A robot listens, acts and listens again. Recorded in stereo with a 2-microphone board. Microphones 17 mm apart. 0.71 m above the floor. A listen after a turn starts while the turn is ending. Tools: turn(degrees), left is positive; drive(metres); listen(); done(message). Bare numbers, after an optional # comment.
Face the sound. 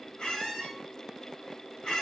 # The squeak: about 70° left or 110° left.
turn(70)
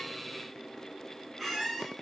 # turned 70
done("Facing the squeak.")